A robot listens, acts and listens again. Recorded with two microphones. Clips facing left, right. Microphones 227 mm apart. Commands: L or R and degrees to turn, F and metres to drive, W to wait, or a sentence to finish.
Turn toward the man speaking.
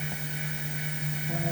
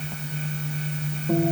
W
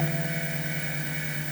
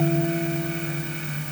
W
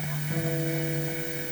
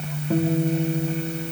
I can't make out a man speaking to turn to.